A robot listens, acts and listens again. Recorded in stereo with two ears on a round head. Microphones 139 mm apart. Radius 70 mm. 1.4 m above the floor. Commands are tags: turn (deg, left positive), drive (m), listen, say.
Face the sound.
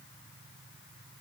<listen/>
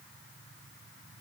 <listen/>
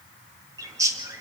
<turn deg="-20"/>
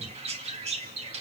<turn deg="-135"/>
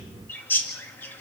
<turn deg="10"/>
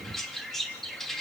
<say>Facing the bird, 2 to 4 m away.</say>